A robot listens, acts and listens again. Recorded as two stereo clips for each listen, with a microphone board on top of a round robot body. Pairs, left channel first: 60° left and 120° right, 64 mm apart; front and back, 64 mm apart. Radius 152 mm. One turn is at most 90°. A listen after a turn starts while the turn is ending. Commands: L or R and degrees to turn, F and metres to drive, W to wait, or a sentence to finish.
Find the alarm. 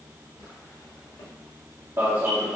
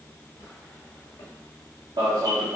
L90
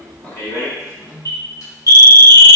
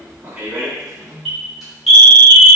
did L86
L90
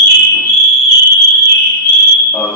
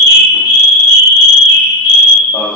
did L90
Found it: an alarm, straight ahead.